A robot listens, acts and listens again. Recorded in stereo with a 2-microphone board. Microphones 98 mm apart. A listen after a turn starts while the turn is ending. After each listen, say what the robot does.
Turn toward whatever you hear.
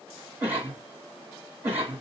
Turn 15° right.
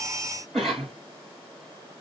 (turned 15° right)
Facing the cough.